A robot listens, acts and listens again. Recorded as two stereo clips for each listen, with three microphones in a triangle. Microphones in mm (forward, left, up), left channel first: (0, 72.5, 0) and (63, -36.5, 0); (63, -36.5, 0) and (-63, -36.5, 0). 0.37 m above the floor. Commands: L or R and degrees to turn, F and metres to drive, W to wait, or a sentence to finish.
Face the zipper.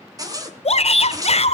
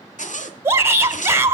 Facing the zipper.